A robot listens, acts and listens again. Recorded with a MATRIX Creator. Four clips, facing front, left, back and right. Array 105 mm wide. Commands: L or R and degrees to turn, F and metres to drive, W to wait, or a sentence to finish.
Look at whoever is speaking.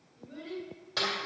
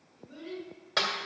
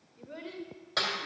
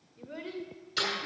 R125
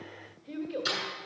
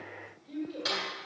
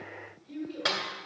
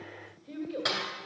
R20
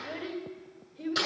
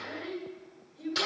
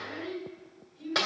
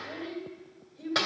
Facing the child speaking.